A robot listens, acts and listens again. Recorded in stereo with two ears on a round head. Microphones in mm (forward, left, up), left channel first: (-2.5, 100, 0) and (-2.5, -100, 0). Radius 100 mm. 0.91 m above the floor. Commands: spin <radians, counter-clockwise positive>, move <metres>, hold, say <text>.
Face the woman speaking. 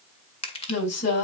spin 1.57
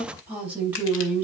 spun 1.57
spin -0.17
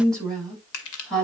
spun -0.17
say Found it: a woman speaking, straight ahead.